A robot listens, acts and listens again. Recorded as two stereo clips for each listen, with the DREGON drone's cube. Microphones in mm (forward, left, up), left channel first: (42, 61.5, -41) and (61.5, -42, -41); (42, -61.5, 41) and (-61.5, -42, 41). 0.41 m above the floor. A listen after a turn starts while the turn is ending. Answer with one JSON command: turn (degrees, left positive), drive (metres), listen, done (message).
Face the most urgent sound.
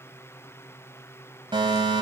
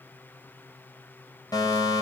{"turn": -55}
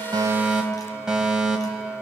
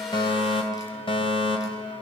{"done": "Facing the fire alarm, 2 to 4 m away."}